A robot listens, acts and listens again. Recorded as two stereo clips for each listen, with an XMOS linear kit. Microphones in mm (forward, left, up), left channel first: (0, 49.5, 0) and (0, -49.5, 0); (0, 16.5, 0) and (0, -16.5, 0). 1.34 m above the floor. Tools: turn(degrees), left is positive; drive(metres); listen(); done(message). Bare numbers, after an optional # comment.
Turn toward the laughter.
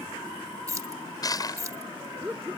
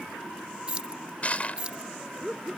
# The laughter: about 15° right or 165° right.
turn(-15)
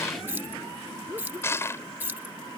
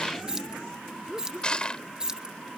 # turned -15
# The laughter: about 30° right or 150° right.
turn(-30)
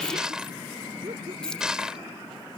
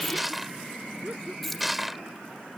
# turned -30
listen()
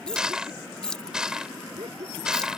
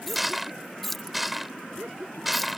# So it is at 115° right.
turn(-115)
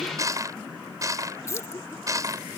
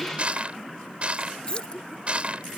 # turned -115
listen()
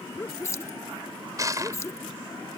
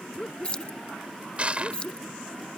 # The laughter is now 25° left.
turn(25)
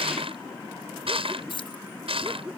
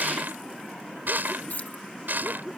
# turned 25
# The laughter is now 10° right.
turn(-10)
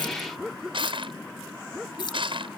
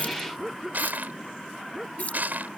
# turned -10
done("Facing the laughter.")